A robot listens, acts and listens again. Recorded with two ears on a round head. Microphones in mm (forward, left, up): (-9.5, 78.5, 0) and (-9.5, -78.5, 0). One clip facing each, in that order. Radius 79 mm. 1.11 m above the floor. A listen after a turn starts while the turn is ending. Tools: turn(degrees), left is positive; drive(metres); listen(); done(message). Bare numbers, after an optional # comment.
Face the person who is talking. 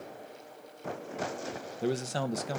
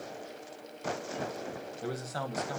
# The man speaking: about 30° left or 150° left.
turn(30)
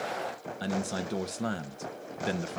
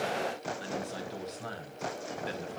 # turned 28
# So it is at 120° left.
turn(120)
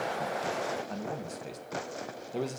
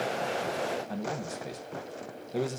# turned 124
done("Facing the man speaking.")